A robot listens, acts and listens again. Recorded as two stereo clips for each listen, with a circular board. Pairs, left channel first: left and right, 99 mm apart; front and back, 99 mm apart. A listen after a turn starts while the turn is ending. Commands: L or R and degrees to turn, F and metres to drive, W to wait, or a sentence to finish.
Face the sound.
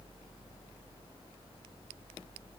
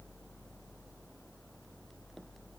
W
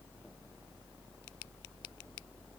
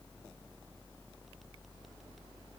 W
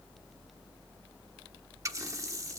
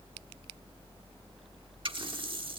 R145
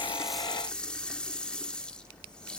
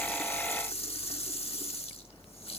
L10
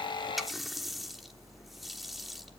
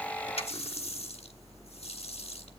Found it: a running tap, straight ahead.